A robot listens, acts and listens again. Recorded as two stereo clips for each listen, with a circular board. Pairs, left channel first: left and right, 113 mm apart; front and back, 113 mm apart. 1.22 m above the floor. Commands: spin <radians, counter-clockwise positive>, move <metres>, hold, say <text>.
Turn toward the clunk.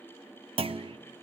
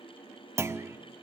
spin -2.01
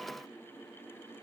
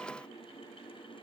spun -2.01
say Facing where the clunk came from. I can't hear it now.